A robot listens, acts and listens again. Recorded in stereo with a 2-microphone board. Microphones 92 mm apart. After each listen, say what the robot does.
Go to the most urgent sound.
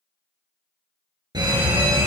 Turn 55° right.
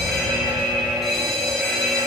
Drive 1.0 m forward.
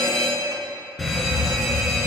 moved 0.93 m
Drive 1.0 m forward.
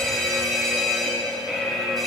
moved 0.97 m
Drive 1.0 m forward.
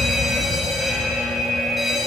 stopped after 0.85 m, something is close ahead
Arrived at the fire alarm, straight ahead.